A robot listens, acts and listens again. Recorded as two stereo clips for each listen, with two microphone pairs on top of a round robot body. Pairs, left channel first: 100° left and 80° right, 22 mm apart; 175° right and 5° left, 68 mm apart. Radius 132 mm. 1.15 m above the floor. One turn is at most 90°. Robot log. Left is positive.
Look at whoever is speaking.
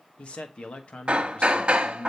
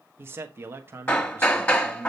note: The man speaking: 65° left.
cmd yaw +65
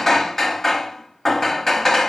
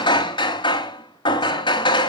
cmd idle
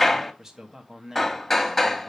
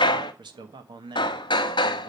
end: Found it: a man speaking, straight ahead, 1 to 2 m away.